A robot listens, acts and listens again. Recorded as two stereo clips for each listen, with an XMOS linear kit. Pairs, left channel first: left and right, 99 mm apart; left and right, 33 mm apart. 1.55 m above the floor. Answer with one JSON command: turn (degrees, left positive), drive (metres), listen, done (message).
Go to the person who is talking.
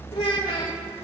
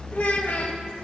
{"turn": 90}
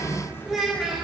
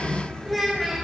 {"drive": 1.0}
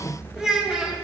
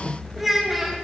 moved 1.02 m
{"turn": -10}
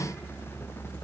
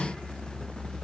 {"listen": true}
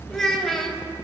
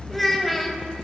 {"drive": 1.0}
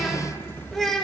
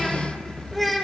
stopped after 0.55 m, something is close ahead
{"done": "I am next to the child speaking."}